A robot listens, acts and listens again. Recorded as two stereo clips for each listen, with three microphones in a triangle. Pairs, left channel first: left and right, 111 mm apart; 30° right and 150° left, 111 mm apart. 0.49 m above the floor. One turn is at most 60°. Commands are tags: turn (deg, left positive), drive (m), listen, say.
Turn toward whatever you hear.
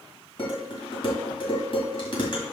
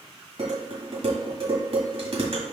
<turn deg="60"/>
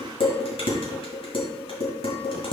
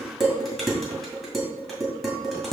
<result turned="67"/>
<turn deg="60"/>
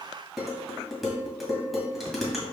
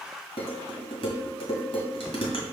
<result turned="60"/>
<say>Facing the dishes clattering, 1 to 2 m away.</say>